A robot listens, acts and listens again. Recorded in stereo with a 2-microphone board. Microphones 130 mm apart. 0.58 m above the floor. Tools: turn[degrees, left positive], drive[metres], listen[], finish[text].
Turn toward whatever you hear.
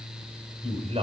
Thought: The man speaking: about 50° right or 130° right.
Action: turn[-50]
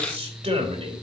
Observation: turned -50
Thought: So it is at 75° right.
Action: turn[-75]
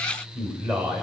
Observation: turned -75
Thought: The man speaking is now 25° right.
Action: turn[-25]
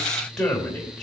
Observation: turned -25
Action: finish[Found it: a man speaking, straight ahead, 2 to 4 m away.]